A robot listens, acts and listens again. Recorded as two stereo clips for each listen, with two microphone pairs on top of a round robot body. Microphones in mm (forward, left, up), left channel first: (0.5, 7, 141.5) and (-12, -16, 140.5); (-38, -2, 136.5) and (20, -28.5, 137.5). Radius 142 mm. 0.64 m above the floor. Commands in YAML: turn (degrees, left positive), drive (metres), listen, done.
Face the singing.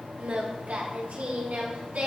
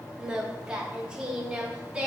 turn: -100
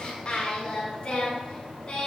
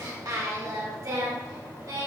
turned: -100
done: "Facing the singing, over 4 m away."